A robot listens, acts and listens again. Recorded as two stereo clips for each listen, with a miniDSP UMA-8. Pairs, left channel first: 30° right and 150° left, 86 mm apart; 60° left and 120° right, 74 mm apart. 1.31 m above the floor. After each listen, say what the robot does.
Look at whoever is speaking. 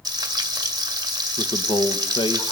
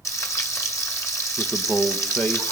Turn 10° right.
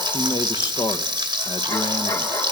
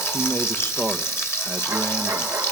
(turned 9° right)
Found it: a man speaking, straight ahead.